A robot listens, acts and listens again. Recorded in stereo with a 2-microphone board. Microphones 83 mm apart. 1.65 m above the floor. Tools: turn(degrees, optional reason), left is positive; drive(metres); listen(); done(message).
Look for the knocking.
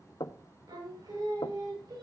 turn(degrees=60, reason="The knocking: about 60° left or 120° left.")
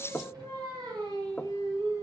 turn(degrees=15, reason="So it is at 15° left.")
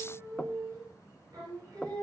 done("Found it: knocking, straight ahead.")